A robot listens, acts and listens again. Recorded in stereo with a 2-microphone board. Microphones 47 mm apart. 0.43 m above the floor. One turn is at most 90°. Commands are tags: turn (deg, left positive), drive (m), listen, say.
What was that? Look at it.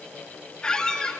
<turn deg="15"/>
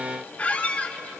<turn deg="90"/>
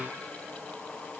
<turn deg="55"/>
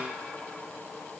<listen/>
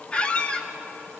<turn deg="25"/>
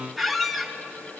<say>Facing the squeak.</say>